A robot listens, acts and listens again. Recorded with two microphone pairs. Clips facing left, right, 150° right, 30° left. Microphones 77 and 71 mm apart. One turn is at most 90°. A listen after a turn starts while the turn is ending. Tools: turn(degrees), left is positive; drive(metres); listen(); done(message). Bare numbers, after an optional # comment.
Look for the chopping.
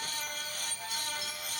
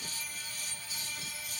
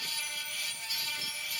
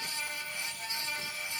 listen()
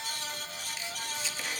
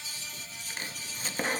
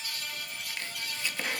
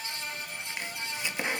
# The chopping: 40° right.
turn(-40)
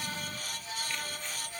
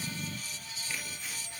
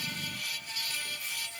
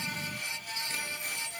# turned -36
listen()
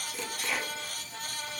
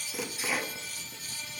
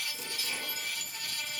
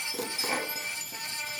done("Facing the chopping.")